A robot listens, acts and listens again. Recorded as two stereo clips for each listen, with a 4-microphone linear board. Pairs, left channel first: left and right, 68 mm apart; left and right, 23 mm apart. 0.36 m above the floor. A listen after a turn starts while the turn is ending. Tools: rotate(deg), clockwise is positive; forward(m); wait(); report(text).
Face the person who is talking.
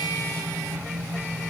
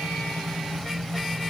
wait()
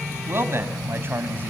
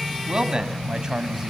rotate(30)
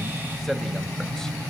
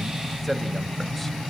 report("Facing the man speaking, 1 to 2 m away.")